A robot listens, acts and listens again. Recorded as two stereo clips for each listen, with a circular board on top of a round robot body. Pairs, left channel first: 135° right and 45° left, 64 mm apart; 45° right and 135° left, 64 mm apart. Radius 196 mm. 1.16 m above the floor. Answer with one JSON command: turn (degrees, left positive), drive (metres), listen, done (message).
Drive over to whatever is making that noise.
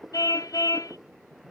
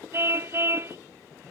{"turn": -170}
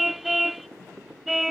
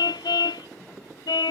{"turn": -45}
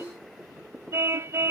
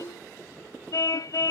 {"drive": 1.0}
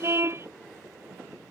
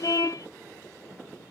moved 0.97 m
{"drive": 1.0}
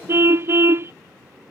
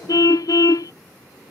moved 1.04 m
{"turn": -10}
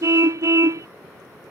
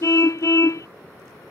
{"drive": 1.0}
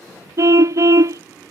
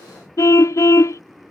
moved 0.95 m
{"drive": 1.0}
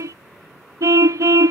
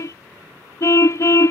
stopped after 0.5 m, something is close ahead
{"done": "Arrived at the car horn, straight ahead."}